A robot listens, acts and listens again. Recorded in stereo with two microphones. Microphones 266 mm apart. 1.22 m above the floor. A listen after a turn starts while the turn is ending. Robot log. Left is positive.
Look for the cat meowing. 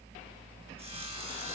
cmd idle
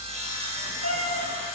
note: The cat meowing: about 60° right or 120° right.
cmd yaw -60
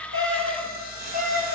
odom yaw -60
note: So it is at 30° right.
cmd yaw -30
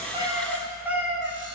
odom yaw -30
end: Found it: a cat meowing, straight ahead.